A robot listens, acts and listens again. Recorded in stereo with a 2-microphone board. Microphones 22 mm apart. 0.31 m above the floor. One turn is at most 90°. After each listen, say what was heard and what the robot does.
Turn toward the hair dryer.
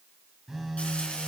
Keep listening.
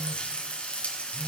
Keep listening.
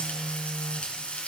I can't make out a hair dryer to turn to.